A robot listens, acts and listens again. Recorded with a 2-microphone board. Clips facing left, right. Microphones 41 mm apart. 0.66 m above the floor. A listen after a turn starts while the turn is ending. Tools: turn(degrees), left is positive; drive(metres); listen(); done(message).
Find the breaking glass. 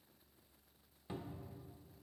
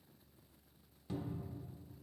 listen()
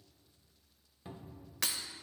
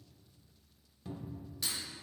turn(degrees=75)
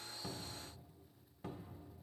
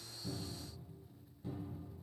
listen()
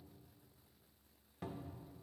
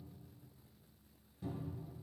done("I heard breaking glass, but can't make it out now. It was about straight ahead or 30° left.")